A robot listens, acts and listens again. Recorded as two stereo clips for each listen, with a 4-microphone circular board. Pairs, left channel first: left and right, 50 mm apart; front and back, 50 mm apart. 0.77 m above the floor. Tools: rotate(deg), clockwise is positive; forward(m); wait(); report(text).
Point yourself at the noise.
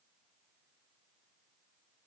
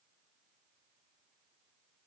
wait()
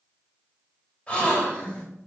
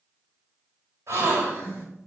rotate(-155)
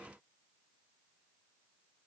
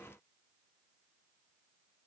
report("Facing where the gasp came from. I can't hear it now.")